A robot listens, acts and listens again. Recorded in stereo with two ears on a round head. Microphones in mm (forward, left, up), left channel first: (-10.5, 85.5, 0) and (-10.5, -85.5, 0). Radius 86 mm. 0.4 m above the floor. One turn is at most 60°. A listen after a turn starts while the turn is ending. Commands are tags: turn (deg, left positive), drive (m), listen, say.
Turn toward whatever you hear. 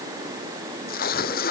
<turn deg="55"/>
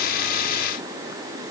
<listen/>
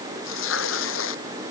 <turn deg="60"/>
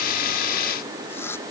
<turn deg="10"/>
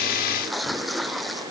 <say>Found it: tearing paper, straight ahead.</say>